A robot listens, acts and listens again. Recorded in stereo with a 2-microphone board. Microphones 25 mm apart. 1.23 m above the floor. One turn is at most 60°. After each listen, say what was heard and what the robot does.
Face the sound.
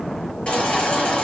The baby crying: about 40° left or 140° left. Turn 40° left.
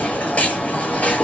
So it is at 100° left. Turn 60° left.
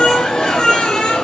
The baby crying is now 45° left. Turn 45° left.
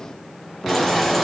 Keep listening.
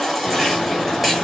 Facing the baby crying.